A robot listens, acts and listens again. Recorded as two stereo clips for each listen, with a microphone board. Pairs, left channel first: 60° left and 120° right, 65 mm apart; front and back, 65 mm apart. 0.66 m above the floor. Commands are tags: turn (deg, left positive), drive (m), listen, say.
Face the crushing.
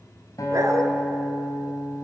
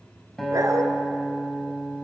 <listen/>
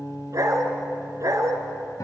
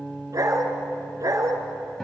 <listen/>
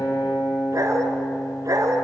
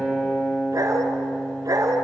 <say>I can't make out crushing to turn to.</say>